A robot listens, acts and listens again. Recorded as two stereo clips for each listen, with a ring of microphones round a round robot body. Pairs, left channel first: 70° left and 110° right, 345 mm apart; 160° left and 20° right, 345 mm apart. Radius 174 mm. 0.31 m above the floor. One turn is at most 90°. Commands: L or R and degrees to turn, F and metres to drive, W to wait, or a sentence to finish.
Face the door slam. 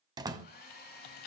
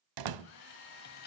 R35
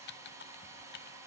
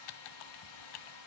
Facing where the door slam came from. I can't hear it now.